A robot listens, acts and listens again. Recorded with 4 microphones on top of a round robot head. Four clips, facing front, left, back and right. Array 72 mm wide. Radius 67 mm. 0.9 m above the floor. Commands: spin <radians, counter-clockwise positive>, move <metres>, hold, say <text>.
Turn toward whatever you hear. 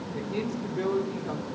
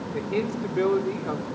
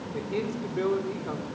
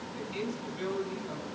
spin 1.66
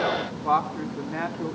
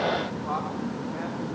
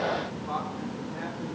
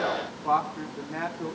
spin -0.44
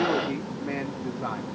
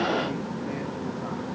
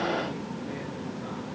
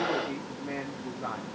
hold
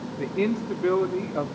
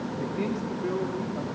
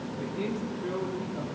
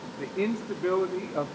spin -0.44
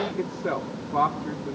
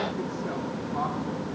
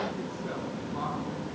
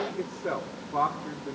spin -0.17
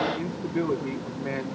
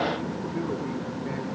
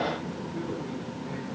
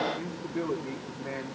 say Facing the man speaking, 2 to 4 m away.